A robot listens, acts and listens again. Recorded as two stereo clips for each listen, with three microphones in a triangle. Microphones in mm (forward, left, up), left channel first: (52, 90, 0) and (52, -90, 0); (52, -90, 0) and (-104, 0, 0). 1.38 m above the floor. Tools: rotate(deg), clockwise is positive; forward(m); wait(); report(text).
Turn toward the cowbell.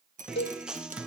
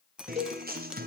rotate(-100)
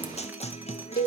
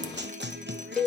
rotate(-55)
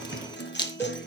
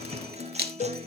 wait()
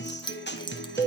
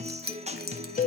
rotate(-10)
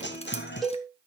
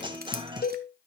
report("Facing the cowbell.")